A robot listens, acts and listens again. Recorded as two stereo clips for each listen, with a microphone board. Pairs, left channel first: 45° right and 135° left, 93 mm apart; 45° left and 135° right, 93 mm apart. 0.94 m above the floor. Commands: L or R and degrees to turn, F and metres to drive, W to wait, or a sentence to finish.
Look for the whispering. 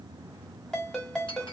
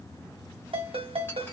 W
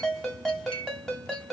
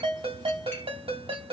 W
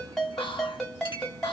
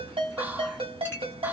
R65
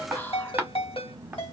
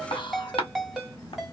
L20
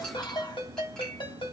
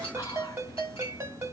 Found it: whispering, straight ahead.